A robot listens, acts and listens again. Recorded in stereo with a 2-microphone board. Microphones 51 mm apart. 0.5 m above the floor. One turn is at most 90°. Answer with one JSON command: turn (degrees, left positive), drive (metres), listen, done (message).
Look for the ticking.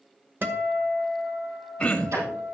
{"turn": -90}
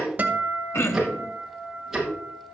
{"done": "Facing the ticking."}